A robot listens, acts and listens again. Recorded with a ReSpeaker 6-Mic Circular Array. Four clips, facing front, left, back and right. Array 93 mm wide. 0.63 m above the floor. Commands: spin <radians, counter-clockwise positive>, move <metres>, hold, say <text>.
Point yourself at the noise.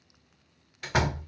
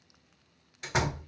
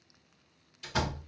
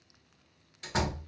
spin 0.26
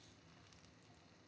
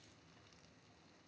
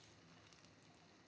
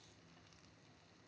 say I heard a door slam from this way, but can't make it out now.